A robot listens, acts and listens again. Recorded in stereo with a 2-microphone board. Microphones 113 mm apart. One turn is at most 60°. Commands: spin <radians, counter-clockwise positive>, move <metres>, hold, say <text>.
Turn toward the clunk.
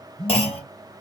spin 1.05
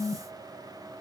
hold
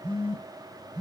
say I heard a clunk, but can't make it out now. It was about straight ahead or 60° left.